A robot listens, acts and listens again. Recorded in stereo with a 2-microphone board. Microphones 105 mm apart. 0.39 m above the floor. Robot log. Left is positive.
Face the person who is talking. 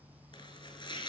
cmd idle
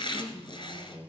note: The woman speaking: about 40° left or 140° left.
cmd yaw +40
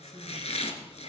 cmd idle
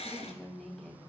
end: Found it: a woman speaking, straight ahead, 2 to 4 m away.